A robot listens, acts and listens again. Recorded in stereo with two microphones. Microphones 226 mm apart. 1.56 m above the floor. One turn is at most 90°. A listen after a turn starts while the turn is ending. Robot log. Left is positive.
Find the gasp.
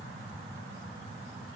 cmd idle
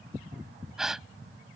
cmd yaw +30
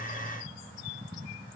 cmd idle
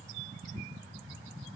end: I heard a gasp, but can't make it out now. It was about 30° right or 150° left.